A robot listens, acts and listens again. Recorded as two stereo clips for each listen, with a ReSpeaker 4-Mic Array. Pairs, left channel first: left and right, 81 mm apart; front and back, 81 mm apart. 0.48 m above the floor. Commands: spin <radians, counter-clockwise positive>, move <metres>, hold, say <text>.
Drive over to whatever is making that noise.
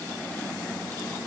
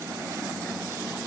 hold
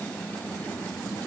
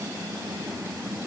hold
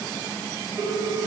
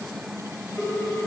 spin -1.40
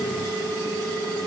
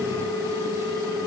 move 1.0
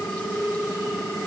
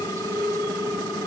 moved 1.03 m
move 1.0
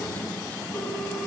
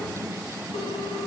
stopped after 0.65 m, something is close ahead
hold
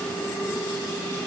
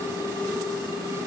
spin 0.17
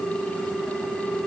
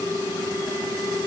say I am next to the ringtone.